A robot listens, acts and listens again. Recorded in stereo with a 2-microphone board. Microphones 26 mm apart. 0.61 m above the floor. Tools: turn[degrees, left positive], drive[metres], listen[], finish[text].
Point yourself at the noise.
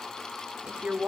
Thought: The woman speaking: about 55° right or 125° right.
Action: turn[-55]
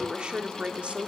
Thought: So it is at 50° right.
Action: turn[-50]
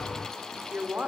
Thought: The woman speaking is now 55° right.
Action: turn[-55]
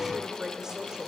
Thought: The woman speaking is now 30° right.
Action: turn[-30]
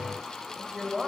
Thought: The woman speaking is now 10° right.
Action: turn[-10]
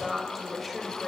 Action: finish[Facing the woman speaking.]